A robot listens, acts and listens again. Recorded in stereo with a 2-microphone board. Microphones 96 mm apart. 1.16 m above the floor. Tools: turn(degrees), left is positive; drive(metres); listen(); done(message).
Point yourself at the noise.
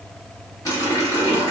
turn(degrees=40)
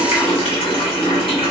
turn(degrees=100)
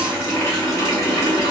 turn(degrees=30)
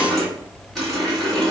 done("Facing the running tap, 1 to 2 m away.")